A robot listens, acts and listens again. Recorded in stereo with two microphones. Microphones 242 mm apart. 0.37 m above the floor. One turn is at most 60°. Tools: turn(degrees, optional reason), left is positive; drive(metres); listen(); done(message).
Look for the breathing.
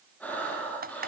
turn(degrees=30)
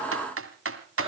listen()
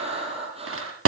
turn(degrees=-25, reason="So it is at 25° right.")
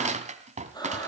turn(degrees=15, reason="The breathing is now 15° left.")
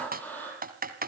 done("Found it: breathing, straight ahead.")